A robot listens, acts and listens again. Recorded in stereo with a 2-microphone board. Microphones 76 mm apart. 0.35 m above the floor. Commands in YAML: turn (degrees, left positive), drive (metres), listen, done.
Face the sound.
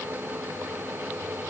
listen: true
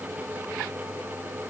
listen: true
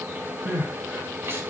turn: -30
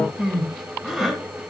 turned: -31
done: "Facing the crying."